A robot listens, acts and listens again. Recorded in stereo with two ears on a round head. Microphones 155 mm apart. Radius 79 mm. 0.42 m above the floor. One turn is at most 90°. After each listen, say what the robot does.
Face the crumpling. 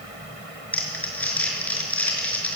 Turn 30° left.
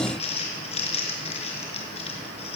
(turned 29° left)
Turn 90° left.
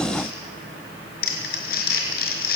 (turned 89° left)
Turn 55° left.
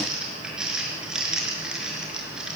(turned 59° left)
Facing the crumpling, over 4 m away.